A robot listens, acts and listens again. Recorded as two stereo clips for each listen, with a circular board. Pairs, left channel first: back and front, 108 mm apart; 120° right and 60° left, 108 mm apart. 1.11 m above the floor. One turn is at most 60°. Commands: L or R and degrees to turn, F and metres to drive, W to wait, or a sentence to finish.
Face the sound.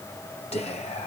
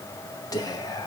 R60
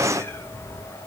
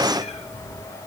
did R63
R60
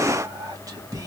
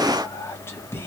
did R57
R55
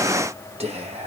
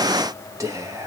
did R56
Facing the whispering.